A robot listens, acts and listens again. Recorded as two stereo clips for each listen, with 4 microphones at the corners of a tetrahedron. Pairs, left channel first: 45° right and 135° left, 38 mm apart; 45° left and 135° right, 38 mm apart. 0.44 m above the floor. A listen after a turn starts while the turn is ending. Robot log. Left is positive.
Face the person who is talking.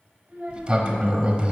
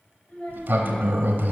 note: The child speaking: 90° left.
cmd yaw +90
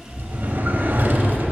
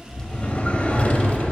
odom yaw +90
cmd idle
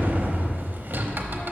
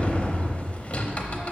cmd idle
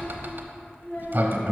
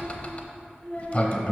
end: Facing the child speaking.